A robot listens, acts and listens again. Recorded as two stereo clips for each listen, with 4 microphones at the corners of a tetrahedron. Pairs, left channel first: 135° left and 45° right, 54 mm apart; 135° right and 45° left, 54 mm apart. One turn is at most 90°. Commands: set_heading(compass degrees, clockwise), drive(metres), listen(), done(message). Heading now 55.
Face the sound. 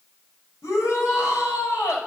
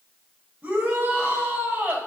set_heading(325)
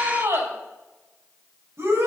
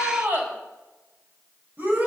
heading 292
set_heading(307)
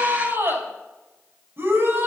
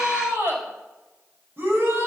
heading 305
done("Facing the shout, over 4 m away.")